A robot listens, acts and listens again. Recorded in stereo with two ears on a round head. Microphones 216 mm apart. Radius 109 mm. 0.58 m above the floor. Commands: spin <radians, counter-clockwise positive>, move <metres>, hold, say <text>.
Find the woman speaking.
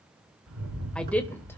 spin 0.52
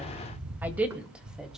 spin -0.52
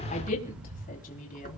spin 0.61
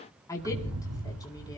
spin 0.26
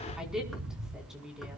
say Facing the woman speaking, over 4 m away.